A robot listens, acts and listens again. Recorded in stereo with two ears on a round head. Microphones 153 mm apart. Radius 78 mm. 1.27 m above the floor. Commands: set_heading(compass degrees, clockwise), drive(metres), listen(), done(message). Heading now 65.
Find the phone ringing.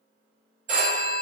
set_heading(110)
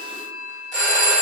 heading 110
done("Found it: a phone ringing, straight ahead, 1 to 2 m away.")